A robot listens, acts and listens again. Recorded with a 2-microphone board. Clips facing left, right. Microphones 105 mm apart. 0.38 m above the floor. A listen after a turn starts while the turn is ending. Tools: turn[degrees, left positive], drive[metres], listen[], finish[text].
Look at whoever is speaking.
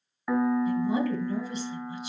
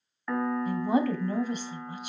Thought: The woman speaking: about 55° right or 125° right.
Action: turn[-55]
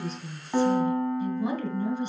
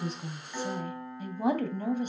Thought: So it is at 65° right.
Action: turn[-65]
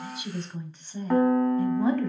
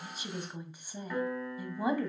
Thought: The woman speaking is now 15° right.
Action: turn[-15]
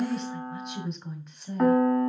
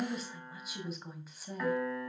Action: finish[Facing the woman speaking.]